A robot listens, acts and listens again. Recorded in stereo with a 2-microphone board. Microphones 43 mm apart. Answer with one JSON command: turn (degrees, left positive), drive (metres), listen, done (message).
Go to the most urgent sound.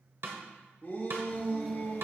{"turn": 45}
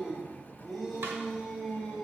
{"drive": 1.0}
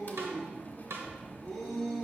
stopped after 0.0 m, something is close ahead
{"done": "Blocked. The shout is further on, straight ahead."}